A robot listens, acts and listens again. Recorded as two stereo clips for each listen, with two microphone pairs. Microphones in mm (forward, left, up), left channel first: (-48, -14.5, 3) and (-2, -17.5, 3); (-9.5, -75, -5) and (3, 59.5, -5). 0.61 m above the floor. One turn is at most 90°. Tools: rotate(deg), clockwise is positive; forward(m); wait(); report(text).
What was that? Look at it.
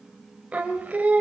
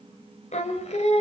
rotate(60)
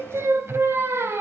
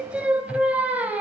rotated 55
report("Found it: singing, straight ahead, 2 to 4 m away.")